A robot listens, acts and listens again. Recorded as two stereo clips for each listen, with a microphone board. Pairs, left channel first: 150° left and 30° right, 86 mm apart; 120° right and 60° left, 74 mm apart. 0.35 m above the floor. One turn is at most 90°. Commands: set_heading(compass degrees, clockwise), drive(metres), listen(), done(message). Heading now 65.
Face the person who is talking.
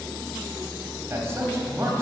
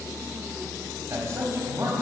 set_heading(40)
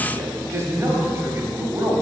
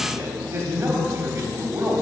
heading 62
set_heading(42)
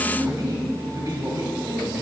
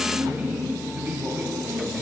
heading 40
done("Facing the man speaking.")